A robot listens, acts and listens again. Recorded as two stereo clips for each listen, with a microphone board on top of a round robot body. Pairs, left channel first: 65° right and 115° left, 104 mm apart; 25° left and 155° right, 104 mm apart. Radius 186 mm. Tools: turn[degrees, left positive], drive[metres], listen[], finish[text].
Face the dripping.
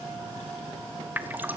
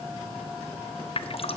Thought: The dripping: 40° left.
Action: turn[40]
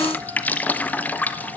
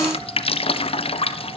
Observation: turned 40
Action: finish[Found it: dripping, straight ahead.]